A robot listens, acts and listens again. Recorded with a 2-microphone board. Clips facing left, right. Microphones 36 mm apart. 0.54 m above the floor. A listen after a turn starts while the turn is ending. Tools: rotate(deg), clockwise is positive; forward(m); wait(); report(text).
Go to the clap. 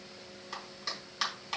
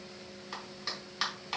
rotate(30)
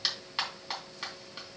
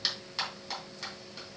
rotate(-20)
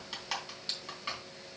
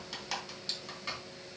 rotate(-10)
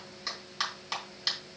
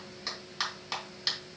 forward(1.0)
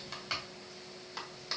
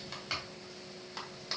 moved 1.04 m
forward(1.0)
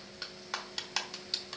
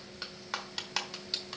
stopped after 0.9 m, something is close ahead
rotate(10)
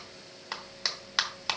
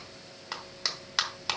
report("I am next to the clap.")